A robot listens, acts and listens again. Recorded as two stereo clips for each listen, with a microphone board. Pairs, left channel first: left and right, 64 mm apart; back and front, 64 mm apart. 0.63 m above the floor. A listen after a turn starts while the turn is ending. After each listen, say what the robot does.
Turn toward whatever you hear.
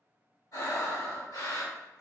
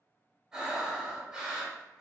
Turn 75° left.
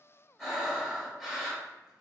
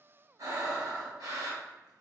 Found it: breathing, straight ahead, 1 to 2 m away.